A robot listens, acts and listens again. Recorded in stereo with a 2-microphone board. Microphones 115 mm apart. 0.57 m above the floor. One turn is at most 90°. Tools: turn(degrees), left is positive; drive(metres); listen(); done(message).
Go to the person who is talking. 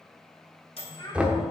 turn(degrees=45)
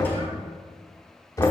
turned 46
listen()
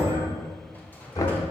listen()
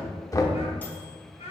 turn(degrees=85)
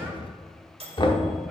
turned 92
listen()
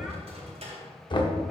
listen()
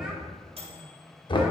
done("I heard a child speaking from this way, but can't make it out now. I did not reach it.")